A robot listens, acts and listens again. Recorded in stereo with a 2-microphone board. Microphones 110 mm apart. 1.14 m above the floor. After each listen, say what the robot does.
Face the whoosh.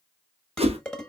Turn 65° right.
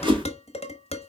Turn 50° right.
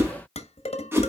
Turn 20° right.
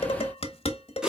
Facing the whoosh.